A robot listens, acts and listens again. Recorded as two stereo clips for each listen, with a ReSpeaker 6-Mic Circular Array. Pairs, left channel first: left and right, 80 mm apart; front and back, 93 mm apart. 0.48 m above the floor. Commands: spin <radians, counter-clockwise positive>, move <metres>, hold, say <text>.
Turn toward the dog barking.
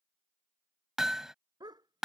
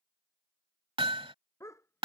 spin -1.05
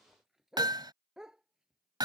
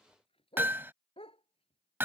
say Facing the dog barking.